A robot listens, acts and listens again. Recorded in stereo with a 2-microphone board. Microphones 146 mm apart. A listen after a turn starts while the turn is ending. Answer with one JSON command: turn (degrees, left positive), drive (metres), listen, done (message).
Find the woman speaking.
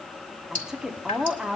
{"turn": -30}
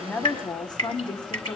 {"turn": 30}
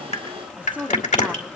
{"turn": -10}
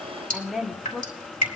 {"done": "Found it: a woman speaking, straight ahead."}